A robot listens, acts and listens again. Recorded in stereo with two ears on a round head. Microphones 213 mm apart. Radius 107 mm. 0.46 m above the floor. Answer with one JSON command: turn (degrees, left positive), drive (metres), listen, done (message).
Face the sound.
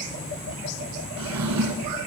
{"turn": -90}
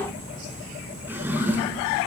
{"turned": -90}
{"turn": -10}
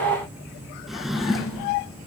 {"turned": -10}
{"done": "Facing the drawer."}